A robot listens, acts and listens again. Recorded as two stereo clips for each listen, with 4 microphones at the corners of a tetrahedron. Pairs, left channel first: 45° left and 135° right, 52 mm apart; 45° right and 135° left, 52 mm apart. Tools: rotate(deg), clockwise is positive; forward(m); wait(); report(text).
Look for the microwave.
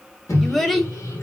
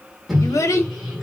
rotate(-50)
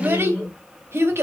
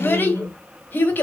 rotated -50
report("Found it: a microwave, straight ahead.")